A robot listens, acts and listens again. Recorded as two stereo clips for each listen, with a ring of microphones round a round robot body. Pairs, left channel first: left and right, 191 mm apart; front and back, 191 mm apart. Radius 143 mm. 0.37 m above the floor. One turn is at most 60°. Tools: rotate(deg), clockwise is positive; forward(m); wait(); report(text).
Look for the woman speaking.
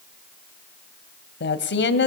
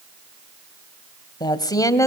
rotate(-60)
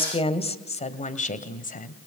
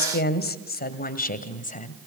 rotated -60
rotate(-45)
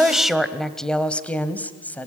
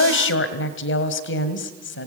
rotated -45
rotate(-10)
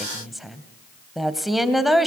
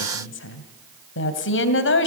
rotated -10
report("Facing the woman speaking.")